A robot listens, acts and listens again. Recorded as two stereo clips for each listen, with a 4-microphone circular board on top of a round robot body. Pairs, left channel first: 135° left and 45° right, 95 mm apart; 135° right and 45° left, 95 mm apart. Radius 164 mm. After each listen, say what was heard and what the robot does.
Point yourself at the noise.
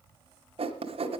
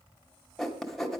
The writing: 50° right. Turn 50° right.
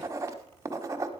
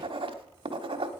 The writing is now 15° left. Turn 15° left.
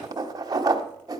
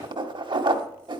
Found it: writing, straight ahead.